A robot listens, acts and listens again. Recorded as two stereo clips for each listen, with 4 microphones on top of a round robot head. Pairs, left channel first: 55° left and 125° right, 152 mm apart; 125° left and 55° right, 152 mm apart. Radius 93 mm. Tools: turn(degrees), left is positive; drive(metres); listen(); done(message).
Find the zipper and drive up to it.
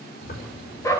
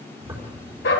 turn(degrees=25)
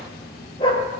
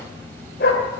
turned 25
turn(degrees=10)
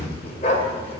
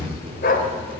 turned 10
drive(metres=1.0)
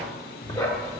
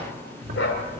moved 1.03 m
drive(metres=1.0)
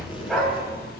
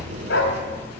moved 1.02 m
drive(metres=1.0)
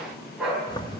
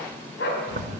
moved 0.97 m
turn(degrees=-10)
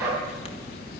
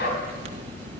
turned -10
drive(metres=1.0)
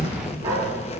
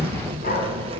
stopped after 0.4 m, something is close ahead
done("I am next to the zipper.")